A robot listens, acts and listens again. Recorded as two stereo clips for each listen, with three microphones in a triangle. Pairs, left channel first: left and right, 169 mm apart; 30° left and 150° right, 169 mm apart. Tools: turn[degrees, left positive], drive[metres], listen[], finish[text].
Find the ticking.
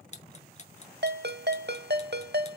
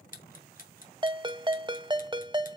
Thought: The ticking: 50° left.
Action: turn[50]
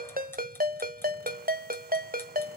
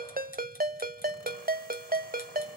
Action: listen[]
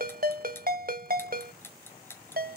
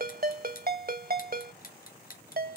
Thought: The ticking is now 15° left.
Action: turn[15]
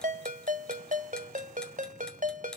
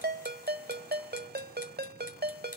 Action: listen[]
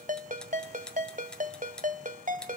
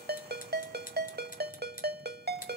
Action: finish[Facing the ticking.]